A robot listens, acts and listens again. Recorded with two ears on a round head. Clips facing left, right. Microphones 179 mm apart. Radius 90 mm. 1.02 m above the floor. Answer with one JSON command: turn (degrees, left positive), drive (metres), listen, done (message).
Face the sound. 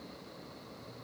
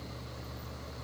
{"listen": true}
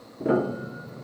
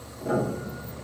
{"turn": 60}
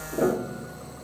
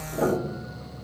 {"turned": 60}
{"turn": 35}
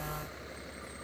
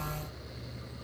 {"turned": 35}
{"listen": true}
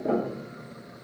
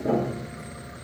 {"done": "Found it: a piano, straight ahead, under 1 m away."}